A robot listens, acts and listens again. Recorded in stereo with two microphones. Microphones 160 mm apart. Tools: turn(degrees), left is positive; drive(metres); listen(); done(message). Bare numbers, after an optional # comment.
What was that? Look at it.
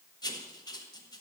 # The writing: about 25° left or 155° left.
turn(25)
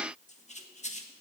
# So it is at 130° left.
turn(130)
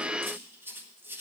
# The writing is now 15° right.
turn(-15)
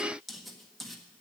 done("Found it: writing, straight ahead, 1 to 2 m away.")